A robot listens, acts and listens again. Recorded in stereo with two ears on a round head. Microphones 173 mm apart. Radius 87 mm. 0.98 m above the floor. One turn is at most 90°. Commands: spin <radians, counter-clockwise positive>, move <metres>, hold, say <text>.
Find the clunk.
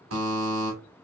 hold
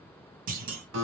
spin -0.87
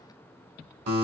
hold
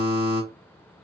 say I heard a clunk, but can't make it out now. It was about straight ahead or 80° right.